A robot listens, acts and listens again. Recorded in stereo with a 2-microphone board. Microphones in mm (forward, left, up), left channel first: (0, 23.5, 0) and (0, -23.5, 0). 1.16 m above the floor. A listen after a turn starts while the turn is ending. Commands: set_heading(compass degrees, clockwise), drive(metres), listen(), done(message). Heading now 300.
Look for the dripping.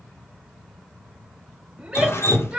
set_heading(235)
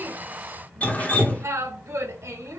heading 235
set_heading(200)
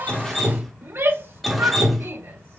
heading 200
done("Found it: dripping, straight ahead, under 1 m away.")